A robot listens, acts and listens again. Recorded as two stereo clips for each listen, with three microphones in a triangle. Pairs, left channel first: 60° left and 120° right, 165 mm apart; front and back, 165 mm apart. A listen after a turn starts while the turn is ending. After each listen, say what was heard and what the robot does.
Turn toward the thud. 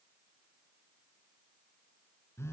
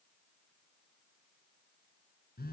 Keep listening.
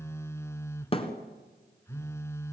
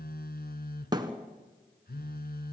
The thud: 115° left. Turn 115° left.
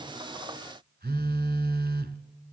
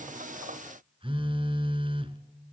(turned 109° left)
Facing where the thud came from. I can't hear it now.